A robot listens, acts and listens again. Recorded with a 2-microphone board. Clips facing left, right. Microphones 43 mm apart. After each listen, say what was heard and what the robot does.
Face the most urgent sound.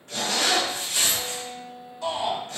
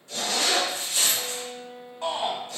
The shout: about 45° right or 135° right. Turn 45° right.
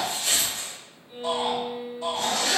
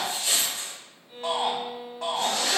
So it is at 90° right. Turn 90° right.
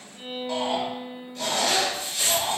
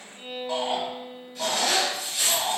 The shout is now 10° right. Turn 10° right.
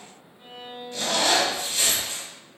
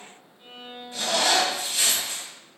Keep listening.
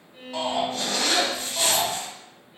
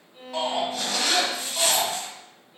Facing the shout.